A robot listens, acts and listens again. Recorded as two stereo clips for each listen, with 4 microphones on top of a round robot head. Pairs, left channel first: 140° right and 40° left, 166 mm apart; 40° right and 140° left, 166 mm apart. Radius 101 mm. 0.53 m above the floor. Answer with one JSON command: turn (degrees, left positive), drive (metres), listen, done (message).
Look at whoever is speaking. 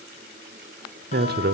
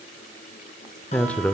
{"turn": 40}
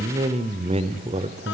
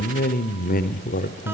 {"turn": -10}
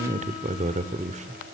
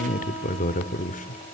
{"done": "Found it: a man speaking, straight ahead."}